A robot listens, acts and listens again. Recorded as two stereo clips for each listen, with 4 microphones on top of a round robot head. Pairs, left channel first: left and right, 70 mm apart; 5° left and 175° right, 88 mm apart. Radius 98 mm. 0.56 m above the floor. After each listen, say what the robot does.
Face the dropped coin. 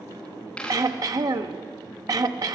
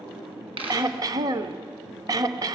Turn 170° left.
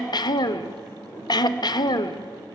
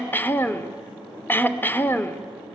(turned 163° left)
I heard a dropped coin from this way, but can't make it out now.